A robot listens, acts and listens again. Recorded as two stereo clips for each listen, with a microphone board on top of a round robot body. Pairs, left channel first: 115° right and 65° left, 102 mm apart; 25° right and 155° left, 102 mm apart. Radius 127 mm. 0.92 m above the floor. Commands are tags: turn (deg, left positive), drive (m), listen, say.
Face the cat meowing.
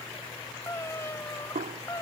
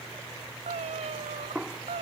<turn deg="-175"/>
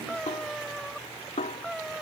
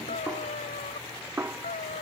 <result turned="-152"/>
<turn deg="-20"/>
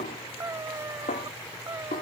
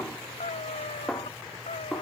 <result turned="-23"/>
<say>Facing the cat meowing.</say>